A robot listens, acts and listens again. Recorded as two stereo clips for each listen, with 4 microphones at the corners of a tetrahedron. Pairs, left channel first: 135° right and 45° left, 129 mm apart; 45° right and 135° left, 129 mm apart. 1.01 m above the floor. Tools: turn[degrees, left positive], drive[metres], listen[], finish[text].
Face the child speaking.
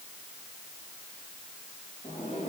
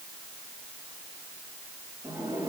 Action: listen[]
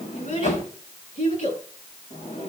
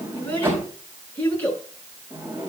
Thought: The child speaking: 120° right.
Action: turn[-120]
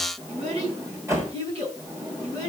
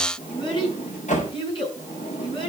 Action: finish[Found it: a child speaking, straight ahead.]